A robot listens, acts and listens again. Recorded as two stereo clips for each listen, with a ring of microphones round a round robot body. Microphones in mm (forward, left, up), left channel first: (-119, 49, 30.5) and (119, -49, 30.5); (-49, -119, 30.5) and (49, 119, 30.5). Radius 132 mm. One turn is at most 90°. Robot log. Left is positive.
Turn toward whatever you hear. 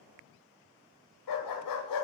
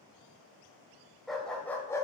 note: The dog barking: 170° left.
cmd yaw +90
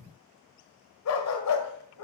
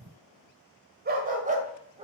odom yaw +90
note: The dog barking is now 135° left.
cmd yaw +90
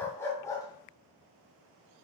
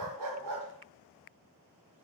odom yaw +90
note: The dog barking is now 80° left.
cmd yaw +80
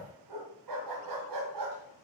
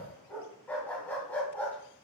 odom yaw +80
note: The dog barking is now 30° right.
cmd yaw -30
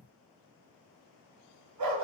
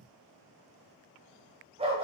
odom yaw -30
end: Facing the dog barking.